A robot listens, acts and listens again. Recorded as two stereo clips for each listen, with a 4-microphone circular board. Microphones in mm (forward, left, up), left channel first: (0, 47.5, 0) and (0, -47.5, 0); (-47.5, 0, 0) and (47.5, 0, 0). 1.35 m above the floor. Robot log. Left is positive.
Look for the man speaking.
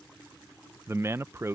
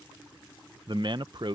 note: The man speaking: 30° right.
cmd yaw -30
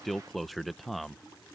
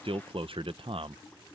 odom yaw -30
end: Found it: a man speaking, straight ahead.